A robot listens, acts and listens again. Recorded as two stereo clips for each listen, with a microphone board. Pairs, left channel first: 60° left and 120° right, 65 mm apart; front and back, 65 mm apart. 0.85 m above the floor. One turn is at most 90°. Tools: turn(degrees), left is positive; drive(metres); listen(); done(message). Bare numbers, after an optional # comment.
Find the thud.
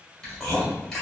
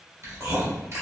listen()
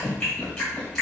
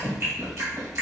listen()
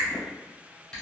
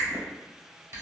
done("I can't make out a thud, only chewing.")